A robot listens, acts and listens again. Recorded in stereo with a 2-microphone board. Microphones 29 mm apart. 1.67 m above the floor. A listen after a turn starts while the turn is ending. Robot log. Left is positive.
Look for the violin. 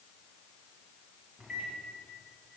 cmd idle
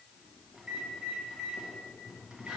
cmd idle
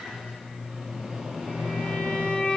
note: The violin: about 60° left or 120° left.
cmd yaw +60
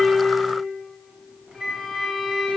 end: Facing the violin, 2 to 4 m away.